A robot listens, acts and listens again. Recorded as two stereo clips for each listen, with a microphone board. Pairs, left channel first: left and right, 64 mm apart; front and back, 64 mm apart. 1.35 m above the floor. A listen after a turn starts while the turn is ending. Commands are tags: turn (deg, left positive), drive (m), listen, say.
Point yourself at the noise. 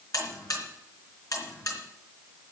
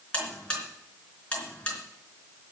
<turn deg="70"/>
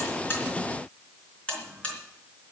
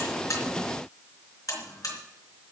<turn deg="20"/>
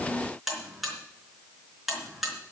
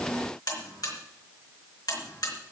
<say>Found it: a buzzer, straight ahead, 2 to 4 m away.</say>